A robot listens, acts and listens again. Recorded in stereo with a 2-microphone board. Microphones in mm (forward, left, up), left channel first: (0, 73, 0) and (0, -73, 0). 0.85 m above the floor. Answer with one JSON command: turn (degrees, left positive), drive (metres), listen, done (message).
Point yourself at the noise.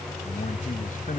{"turn": 65}
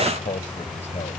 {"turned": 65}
{"turn": 50}
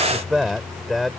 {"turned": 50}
{"done": "Facing the man speaking."}